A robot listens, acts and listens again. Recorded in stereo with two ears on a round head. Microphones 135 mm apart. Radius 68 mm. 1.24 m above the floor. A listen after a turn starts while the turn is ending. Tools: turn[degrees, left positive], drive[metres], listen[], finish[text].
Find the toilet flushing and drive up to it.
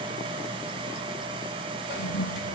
Action: turn[90]
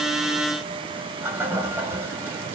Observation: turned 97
Thought: So it is at 15° right.
Action: turn[-15]
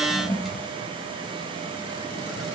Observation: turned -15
Action: drive[1.0]
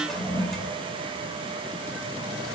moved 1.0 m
Action: drive[1.0]
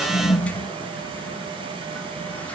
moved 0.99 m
Thought: The toilet flushing is now 10° left.
Action: turn[10]
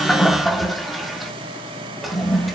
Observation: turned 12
Action: drive[1.0]
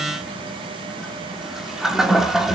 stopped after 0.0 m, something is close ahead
Action: finish[Arrived at the toilet flushing, straight ahead.]